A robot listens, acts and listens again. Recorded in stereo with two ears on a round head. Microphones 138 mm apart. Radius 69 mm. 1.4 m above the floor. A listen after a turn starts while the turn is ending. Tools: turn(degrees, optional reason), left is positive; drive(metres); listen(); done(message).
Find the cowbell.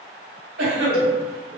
turn(degrees=70, reason="The cowbell: about 70° left or 110° left.")
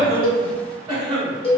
turn(degrees=35, reason="So it is at 35° left.")
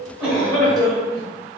listen()
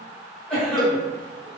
done("Found it: a cowbell, straight ahead, under 1 m away.")